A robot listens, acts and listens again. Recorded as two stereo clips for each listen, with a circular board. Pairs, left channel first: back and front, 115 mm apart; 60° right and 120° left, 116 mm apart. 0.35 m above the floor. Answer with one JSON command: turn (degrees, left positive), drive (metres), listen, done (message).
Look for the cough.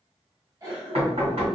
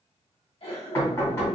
{"turn": -55}
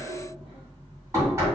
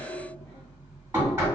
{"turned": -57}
{"done": "Facing the cough, 1 to 2 m away."}